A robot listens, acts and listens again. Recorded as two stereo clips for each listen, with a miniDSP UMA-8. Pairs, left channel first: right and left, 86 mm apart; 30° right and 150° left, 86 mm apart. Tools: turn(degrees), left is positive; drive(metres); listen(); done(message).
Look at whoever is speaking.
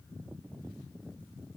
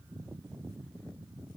listen()
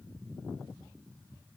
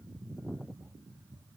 listen()
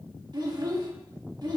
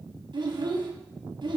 turn(degrees=125)
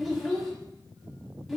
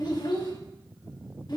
done("Facing the child speaking.")